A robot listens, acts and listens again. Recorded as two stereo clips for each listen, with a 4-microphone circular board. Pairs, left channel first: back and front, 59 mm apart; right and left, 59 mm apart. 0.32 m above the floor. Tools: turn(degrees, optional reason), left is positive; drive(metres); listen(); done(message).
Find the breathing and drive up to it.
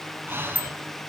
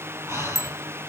turn(degrees=50, reason="The breathing: 50° left.")
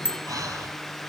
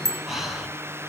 drive(metres=1.0)
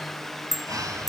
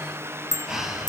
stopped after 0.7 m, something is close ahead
turn(degrees=10, reason="The breathing is now 10° left.")
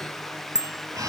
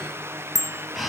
done("Blocked. The breathing is further on, straight ahead.")